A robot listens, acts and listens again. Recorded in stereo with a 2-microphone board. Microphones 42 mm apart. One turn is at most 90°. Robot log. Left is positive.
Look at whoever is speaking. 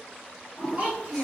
note: The child speaking: about 35° right or 145° right.
cmd yaw -35
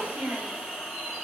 note: So it is at 110° right.
cmd yaw -90
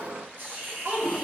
note: The child speaking is now 50° right.
cmd yaw -50
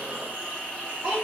note: The child speaking is now 30° right.
cmd yaw -30
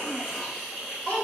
note: The child speaking is now 30° left.
cmd yaw +30
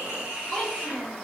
end: Found it: a child speaking, straight ahead, 1 to 2 m away.